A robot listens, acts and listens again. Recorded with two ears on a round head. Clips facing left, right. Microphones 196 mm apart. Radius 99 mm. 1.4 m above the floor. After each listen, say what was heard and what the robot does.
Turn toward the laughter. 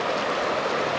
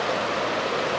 Keep listening.
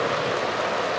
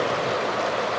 Keep listening.
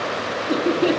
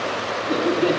Turn 30° left.
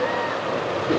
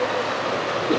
Keep listening.
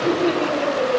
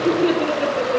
So it is at 15° right. Turn 15° right.
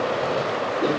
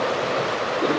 Facing the laughter.